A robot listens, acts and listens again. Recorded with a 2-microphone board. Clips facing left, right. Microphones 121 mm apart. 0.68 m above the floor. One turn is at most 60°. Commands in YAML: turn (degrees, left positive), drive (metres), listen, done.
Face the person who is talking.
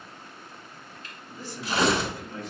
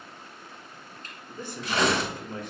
turn: -55
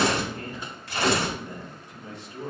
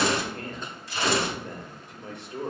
turn: -60
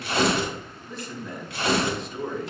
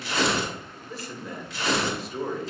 done: "Facing the man speaking."